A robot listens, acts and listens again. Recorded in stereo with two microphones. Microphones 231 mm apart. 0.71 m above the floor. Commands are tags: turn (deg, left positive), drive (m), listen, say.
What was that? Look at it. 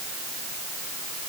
<listen/>
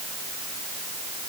<listen/>
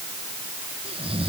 <turn deg="-25"/>
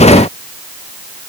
<listen/>
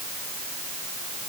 <listen/>
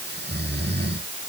<turn deg="-130"/>
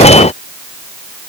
<listen/>
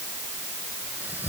<say>Found it: snoring, straight ahead.</say>